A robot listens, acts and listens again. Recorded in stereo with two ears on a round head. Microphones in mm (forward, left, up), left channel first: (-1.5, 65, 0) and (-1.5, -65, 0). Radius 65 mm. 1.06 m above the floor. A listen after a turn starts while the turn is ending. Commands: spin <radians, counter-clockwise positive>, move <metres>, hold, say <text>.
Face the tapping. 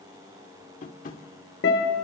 spin 0.96
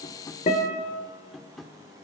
say Facing the tapping.